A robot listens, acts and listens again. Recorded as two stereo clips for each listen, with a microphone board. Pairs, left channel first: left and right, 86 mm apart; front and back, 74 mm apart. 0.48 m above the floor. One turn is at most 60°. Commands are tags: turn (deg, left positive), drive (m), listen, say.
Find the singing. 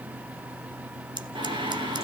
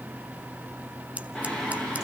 <turn deg="-60"/>
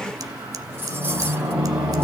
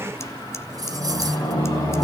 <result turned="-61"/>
<turn deg="-20"/>
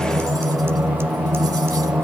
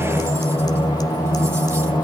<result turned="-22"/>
<say>Facing the singing.</say>